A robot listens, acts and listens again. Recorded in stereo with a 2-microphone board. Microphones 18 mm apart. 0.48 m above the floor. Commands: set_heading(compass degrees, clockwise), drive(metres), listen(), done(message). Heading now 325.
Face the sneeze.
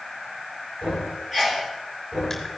set_heading(355)
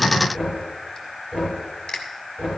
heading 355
listen()
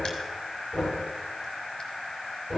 done("I heard a sneeze, but can't make it out now. It was about straight ahead or 120° right.")